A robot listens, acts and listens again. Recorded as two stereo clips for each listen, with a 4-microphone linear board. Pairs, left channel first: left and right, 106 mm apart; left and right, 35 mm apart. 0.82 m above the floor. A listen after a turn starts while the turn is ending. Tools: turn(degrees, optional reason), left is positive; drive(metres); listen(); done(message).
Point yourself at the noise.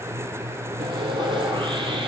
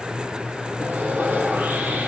turn(degrees=-50, reason="The sawing: about 50° right or 130° right.")
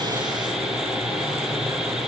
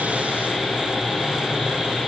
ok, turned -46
done("Facing the sawing, over 4 m away.")